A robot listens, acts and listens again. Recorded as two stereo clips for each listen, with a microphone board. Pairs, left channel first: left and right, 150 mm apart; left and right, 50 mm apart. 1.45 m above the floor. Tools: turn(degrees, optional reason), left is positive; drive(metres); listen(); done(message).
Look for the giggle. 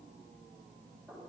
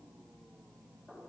listen()
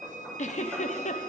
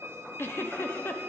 turn(degrees=50, reason="The giggle: about 50° left or 130° left.")
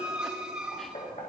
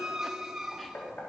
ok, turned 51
listen()
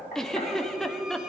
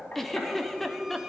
done("Facing the giggle, under 1 m away.")